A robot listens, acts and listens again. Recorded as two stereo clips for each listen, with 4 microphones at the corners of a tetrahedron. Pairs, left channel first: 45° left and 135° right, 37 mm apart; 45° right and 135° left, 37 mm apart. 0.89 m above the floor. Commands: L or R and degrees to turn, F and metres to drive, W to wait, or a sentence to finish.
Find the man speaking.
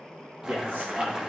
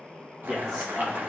R140
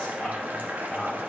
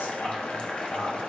R45
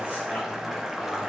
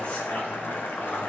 W
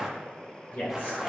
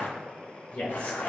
Facing the man speaking, over 4 m away.